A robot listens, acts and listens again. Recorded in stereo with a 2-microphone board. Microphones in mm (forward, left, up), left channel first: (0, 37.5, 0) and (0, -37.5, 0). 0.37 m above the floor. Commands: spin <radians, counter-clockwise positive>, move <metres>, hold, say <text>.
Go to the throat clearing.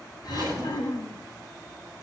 spin 1.13
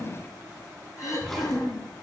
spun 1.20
spin 0.79
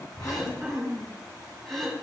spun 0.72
move 1.0
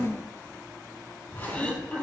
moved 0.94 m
spin 0.35
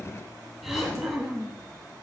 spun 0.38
move 1.0
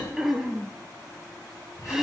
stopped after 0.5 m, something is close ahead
say Arrived at the throat clearing, straight ahead.